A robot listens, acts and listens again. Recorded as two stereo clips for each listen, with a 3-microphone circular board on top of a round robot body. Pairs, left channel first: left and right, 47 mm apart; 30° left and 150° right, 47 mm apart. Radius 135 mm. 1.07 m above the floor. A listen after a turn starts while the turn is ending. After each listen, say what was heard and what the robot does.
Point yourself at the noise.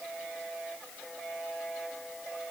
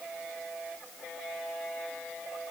Keep listening.
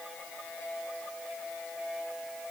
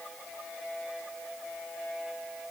Keep listening.
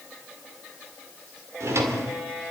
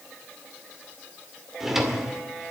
The drawer: 65° right. Turn 65° right.
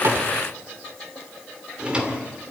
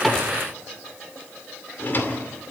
The drawer is now 20° right. Turn 20° right.
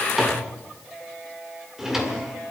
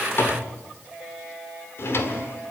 Found it: a drawer, straight ahead.